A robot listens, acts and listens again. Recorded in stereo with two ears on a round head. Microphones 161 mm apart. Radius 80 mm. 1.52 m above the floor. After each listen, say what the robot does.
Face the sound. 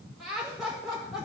Turn 30° left.
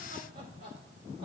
Turn 30° right.
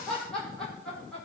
Found it: laughter, straight ahead, over 4 m away.